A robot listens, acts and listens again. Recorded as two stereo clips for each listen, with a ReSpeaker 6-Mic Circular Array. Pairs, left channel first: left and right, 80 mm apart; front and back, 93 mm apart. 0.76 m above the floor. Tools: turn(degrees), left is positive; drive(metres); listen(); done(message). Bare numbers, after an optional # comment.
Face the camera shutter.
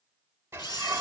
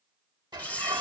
# The camera shutter: 75° left.
turn(75)
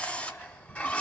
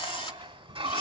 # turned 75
# The camera shutter is now 15° left.
turn(15)
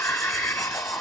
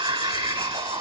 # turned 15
listen()
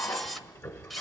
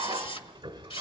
done("Facing the camera shutter, 1 to 2 m away.")